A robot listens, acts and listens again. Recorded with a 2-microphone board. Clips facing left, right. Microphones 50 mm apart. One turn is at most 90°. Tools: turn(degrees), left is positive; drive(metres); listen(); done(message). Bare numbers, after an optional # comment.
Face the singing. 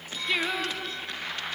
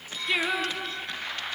turn(-30)
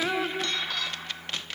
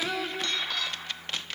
# So it is at 20° left.
turn(20)
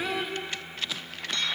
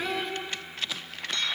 done("Found it: singing, straight ahead.")